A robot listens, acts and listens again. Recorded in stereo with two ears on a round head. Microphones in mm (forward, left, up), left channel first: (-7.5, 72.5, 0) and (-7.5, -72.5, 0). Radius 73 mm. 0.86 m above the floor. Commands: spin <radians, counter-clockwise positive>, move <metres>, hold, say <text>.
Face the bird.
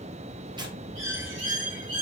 spin -1.57
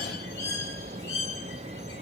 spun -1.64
spin 0.26
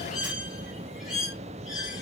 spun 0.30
say Found it: a bird, straight ahead, 2 to 4 m away.